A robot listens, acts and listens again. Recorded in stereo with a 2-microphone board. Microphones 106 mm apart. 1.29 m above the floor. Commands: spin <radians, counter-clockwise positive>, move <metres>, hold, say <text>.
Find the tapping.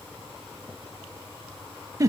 hold
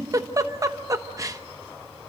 hold
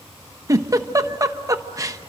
say I can't make out tapping to turn to.